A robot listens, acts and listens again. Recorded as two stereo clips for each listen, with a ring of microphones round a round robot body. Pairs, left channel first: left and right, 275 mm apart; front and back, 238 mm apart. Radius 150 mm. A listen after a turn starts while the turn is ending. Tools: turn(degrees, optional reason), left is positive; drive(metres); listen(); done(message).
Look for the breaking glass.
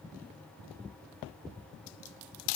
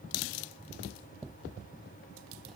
listen()
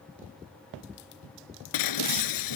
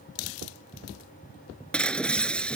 turn(degrees=85, reason="The breaking glass: 85° left.")
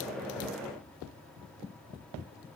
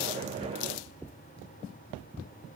done("Facing where the breaking glass came from. I can't hear it now.")